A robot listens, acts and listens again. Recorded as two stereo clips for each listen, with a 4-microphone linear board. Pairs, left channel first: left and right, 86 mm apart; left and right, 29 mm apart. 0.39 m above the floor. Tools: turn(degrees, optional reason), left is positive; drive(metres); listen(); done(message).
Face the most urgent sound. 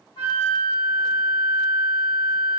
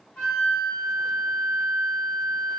listen()
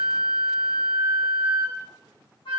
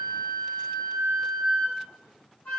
listen()
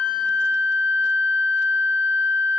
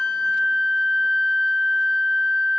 done("I can't make out anything urgent, only a flute.")